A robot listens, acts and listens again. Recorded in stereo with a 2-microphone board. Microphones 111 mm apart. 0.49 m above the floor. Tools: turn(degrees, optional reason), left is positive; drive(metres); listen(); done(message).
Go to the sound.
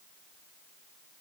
listen()
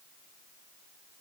listen()
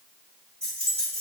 turn(degrees=-90)
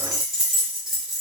drive(metres=1.0)
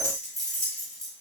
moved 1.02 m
drive(metres=1.0)
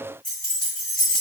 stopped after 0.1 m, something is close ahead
done("I am next to the keys jangling.")